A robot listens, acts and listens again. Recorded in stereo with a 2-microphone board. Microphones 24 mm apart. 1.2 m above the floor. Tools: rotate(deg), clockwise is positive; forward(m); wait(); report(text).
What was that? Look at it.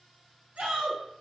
rotate(70)
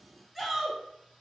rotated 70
report("Found it: a shout, straight ahead.")